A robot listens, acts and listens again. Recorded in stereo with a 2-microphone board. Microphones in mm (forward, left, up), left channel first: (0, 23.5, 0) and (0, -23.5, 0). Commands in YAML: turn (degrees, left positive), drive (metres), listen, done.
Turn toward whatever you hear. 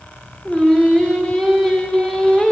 turn: 30
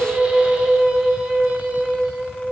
turn: -20
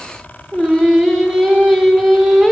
done: "Found it: singing, straight ahead."